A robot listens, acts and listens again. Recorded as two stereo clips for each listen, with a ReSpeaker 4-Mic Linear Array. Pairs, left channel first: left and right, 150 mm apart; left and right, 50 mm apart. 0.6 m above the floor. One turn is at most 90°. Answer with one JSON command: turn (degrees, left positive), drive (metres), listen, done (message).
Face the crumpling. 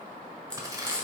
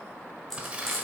{"turn": -25}
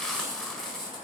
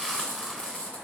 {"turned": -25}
{"listen": true}
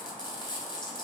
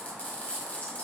{"listen": true}
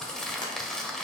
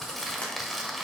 {"done": "Found it: crumpling, straight ahead."}